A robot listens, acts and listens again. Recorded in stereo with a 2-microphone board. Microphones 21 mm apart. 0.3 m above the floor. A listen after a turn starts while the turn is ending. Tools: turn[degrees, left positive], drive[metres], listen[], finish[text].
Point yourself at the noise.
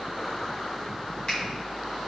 Action: listen[]
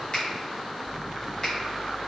Thought: The finger snap: about 45° left or 135° left.
Action: turn[45]
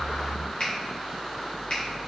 Thought: So it is at 80° left.
Action: turn[80]
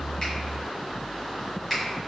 Action: finish[Found it: a finger snap, straight ahead, 2 to 4 m away.]